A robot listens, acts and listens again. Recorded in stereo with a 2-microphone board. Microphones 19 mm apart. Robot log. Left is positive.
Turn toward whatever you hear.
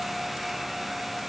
cmd idle
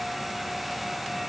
cmd idle
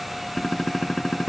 note: The gunshot: about 45° left or 135° left.
cmd yaw +45
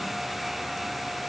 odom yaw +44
cmd idle
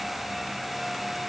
end: I heard a gunshot, but can't make it out now. It was about straight ahead or 90° left.